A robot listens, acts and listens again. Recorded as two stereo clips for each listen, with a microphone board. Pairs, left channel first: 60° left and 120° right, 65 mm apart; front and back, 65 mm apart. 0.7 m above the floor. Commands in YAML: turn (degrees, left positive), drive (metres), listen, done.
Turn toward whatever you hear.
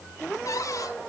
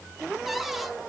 turn: 95
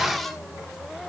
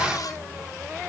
turn: -25
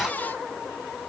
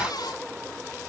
done: "Found it: a cupboard door, straight ahead, 1 to 2 m away."